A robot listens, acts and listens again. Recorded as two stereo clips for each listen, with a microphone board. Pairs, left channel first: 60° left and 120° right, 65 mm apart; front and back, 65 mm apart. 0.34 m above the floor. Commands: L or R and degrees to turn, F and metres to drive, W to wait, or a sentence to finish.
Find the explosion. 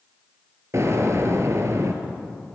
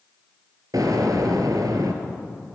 R165
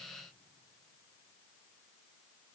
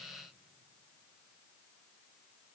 I heard an explosion from this way, but can't make it out now.